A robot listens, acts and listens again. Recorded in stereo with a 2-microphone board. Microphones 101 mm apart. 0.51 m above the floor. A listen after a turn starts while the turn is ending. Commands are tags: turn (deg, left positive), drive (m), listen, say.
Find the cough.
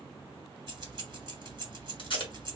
<listen/>
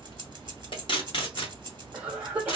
<turn deg="-15"/>
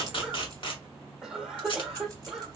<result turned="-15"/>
<say>Found it: a cough, straight ahead, 1 to 2 m away.</say>